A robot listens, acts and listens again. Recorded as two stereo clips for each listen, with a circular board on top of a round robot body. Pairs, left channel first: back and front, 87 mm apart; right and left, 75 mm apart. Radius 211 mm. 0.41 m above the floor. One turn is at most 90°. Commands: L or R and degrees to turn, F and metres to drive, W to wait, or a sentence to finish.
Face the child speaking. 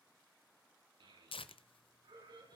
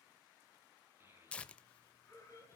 L30
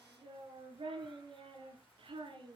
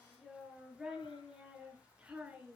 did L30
L15
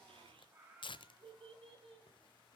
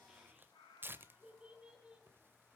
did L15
L15
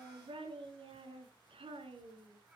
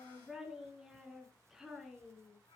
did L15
Facing the child speaking.